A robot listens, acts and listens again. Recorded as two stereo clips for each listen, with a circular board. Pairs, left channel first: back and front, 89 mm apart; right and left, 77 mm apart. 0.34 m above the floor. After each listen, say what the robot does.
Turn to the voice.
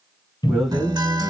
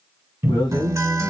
Turn 90° right.
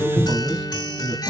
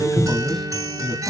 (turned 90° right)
Found it: a man speaking, straight ahead, 1 to 2 m away.